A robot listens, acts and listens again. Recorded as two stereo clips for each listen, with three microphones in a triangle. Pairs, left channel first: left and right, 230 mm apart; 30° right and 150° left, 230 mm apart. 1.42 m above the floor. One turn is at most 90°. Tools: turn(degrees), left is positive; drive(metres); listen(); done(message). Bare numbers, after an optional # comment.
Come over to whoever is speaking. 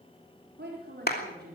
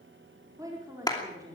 # The woman speaking: 135° right.
turn(-90)
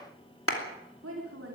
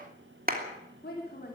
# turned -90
# The woman speaking is now 75° right.
turn(-75)
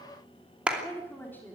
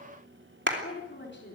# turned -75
# The woman speaking is now 10° left.
turn(10)
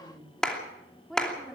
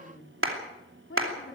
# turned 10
drive(1.0)
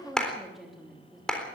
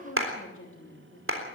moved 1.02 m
drive(1.0)
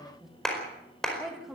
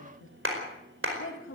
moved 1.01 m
drive(1.0)
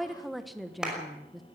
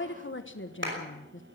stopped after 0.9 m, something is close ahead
done("Arrived at the woman speaking, straight ahead.")